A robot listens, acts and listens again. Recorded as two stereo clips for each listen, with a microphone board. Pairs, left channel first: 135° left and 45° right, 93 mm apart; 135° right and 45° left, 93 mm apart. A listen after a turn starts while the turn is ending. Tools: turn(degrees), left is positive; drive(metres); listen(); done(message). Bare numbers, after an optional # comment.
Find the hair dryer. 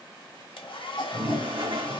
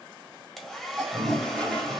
# The hair dryer: 140° left.
turn(140)
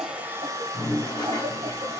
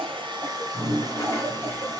done("Found it: a hair dryer, straight ahead.")